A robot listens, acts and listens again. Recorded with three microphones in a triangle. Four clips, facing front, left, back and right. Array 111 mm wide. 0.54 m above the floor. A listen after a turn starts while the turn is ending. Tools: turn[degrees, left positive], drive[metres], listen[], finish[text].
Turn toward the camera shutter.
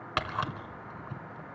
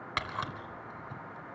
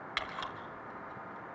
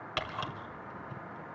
Thought: The camera shutter: 10° left.
Action: turn[10]
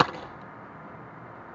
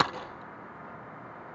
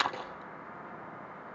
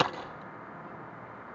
Action: listen[]
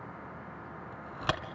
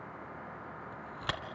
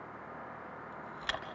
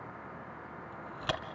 Action: finish[Facing the camera shutter.]